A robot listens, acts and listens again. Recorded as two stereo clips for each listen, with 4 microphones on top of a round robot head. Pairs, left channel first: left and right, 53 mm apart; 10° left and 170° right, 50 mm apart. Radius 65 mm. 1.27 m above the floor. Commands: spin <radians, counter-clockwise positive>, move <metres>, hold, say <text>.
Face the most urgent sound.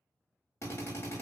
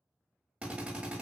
hold
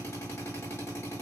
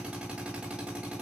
hold
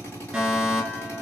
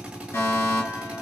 spin -0.26
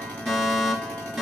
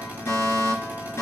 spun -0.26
say Found it: a fire alarm, straight ahead.